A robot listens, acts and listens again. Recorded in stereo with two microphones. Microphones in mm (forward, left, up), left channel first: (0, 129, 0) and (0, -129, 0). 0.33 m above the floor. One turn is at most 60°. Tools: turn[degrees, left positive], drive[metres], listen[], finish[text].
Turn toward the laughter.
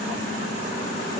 Action: listen[]
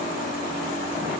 Action: listen[]
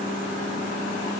Action: finish[I can't make out laughter.]